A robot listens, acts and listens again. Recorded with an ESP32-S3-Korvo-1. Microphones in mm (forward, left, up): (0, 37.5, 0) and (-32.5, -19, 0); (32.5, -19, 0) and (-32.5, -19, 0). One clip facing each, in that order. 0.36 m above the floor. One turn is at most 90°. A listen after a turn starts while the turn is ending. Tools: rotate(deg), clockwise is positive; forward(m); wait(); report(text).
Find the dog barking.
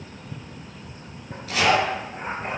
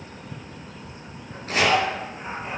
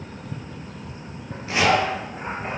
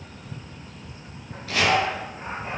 rotate(-25)
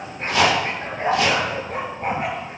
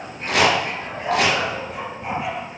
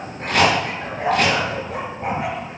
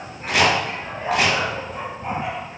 rotate(-20)
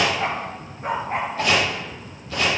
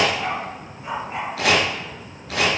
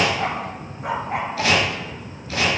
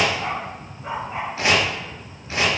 rotate(-20)
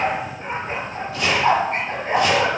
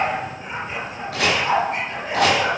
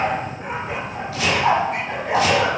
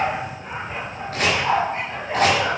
rotate(-10)
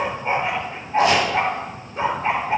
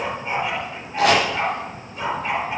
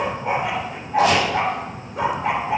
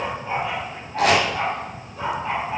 report("Facing the dog barking.")